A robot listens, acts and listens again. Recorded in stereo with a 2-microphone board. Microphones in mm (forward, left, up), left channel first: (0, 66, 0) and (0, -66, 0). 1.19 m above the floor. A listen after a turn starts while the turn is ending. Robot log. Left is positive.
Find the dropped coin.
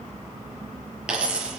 cmd yaw -30
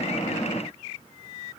cmd idle
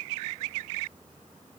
end: I heard a dropped coin, but can't make it out now. It was about 25° left or 145° right.